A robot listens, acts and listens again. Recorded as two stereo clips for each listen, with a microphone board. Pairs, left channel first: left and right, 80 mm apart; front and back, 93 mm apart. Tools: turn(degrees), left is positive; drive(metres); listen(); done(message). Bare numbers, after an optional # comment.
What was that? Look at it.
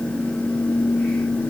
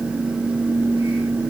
listen()
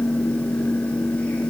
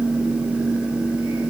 listen()
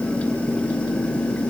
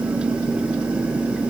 done("I can't make out anything.")